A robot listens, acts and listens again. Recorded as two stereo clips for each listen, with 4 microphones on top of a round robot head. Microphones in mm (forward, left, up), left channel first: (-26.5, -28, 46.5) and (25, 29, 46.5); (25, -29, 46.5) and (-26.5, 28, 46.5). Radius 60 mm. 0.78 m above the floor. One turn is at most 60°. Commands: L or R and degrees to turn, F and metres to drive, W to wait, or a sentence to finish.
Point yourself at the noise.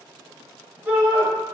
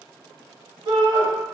L60
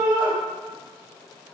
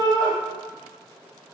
L50
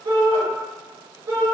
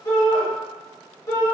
Found it: a shout, straight ahead.